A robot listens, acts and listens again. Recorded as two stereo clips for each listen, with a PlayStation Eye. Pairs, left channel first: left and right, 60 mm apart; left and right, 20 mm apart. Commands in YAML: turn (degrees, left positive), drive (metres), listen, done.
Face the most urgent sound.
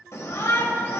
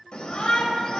turn: 55
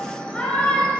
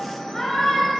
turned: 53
turn: 20
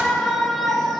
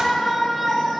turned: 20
done: "Found it: a shout, straight ahead, 1 to 2 m away."